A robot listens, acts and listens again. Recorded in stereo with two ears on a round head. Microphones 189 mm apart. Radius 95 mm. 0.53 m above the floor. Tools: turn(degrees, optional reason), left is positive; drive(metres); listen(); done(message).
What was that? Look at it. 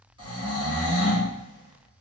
turn(degrees=-20, reason="The snoring: about 20° right or 160° right.")
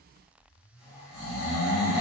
done("Found it: snoring, straight ahead.")